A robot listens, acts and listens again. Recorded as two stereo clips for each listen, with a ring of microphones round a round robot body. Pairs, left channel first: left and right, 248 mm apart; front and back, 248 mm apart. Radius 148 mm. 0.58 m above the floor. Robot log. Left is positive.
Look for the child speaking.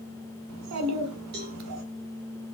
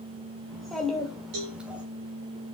note: The child speaking: 95° right.
cmd yaw -95
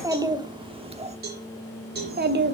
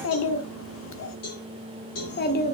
note: The child speaking is now 50° right.
cmd yaw -50
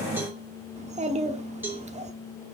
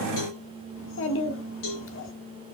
note: The child speaking is now 30° right.
cmd yaw -30
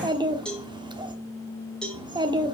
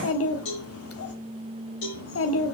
note: The child speaking is now 20° right.
cmd yaw -20
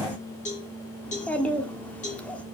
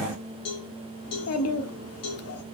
end: Facing the child speaking.